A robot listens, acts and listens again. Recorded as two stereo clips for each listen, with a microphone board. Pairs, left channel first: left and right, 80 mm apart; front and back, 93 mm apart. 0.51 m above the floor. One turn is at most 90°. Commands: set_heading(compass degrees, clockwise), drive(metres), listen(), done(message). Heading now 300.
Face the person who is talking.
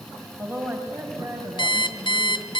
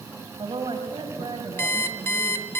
set_heading(30)
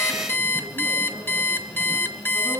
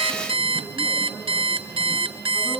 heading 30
set_heading(65)
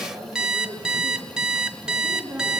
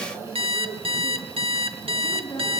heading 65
done("Found it: a woman speaking, straight ahead.")